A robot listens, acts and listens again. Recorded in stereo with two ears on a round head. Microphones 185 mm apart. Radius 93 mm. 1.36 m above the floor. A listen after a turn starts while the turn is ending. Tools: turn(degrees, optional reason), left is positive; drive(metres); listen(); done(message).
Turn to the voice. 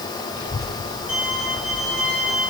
turn(degrees=90)
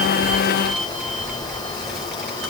turn(degrees=-10, reason="So it is at 10° right.")
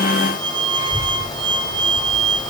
done("Found it: a child speaking, straight ahead.")